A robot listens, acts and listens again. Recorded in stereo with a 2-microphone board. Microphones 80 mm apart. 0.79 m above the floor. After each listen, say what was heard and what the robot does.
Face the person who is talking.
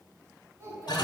The child speaking: about 40° right or 140° right. Turn 40° right.
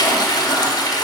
Keep listening.
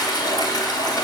Keep listening.
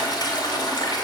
I heard a child speaking, but can't make it out now. It was about straight ahead or 100° right.